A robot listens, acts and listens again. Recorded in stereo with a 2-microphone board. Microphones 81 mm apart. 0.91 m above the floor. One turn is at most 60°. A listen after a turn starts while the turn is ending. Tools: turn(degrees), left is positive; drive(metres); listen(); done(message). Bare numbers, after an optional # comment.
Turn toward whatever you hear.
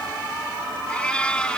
turn(30)
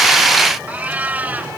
# So it is at 20° right.
turn(-20)
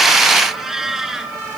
done("Facing the cat meowing.")